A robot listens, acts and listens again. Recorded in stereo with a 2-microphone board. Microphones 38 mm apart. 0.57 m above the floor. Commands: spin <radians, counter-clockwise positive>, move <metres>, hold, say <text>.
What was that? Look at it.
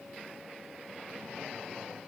hold
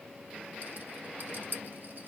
spin -0.96
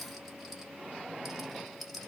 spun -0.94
say Found it: a rattle, straight ahead, 1 to 2 m away.